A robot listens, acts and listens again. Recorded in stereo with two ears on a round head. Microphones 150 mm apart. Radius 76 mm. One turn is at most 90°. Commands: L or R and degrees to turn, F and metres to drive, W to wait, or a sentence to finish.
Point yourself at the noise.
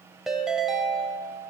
R30
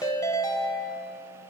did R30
L25
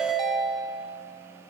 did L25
Facing the ringtone.